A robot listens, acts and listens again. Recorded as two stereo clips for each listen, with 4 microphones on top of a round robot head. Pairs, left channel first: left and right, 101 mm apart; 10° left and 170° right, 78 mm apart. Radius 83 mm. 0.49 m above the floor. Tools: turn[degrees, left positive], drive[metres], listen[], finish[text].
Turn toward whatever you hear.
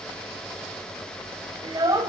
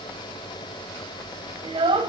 Thought: The child speaking: 150° right.
Action: turn[-150]
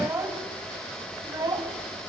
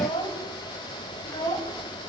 Thought: The child speaking is now 35° right.
Action: turn[-35]
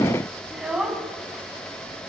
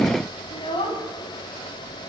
Thought: The child speaking is now 10° right.
Action: turn[-10]
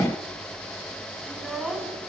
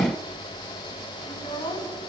Action: finish[Facing the child speaking.]